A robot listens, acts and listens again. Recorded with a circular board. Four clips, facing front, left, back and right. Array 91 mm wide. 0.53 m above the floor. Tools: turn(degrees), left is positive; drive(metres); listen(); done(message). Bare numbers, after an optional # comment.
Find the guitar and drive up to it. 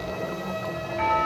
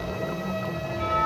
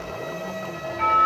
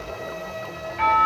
listen()
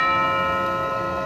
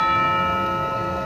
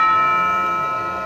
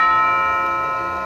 listen()
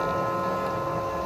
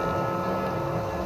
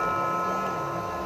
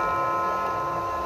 done("I can't make out a guitar to turn to.")